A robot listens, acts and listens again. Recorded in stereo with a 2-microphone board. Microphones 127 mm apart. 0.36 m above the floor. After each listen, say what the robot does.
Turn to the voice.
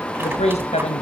Turn 60° left.
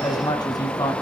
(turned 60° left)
Turn 30° left.
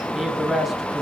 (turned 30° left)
Facing the man speaking.